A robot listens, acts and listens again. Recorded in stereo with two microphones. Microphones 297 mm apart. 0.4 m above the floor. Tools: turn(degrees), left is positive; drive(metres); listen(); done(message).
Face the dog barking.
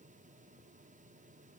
listen()
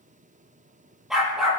turn(degrees=30)
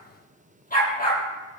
turn(degrees=150)
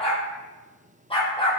turn(degrees=20)
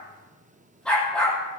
done("Found it: a dog barking, straight ahead.")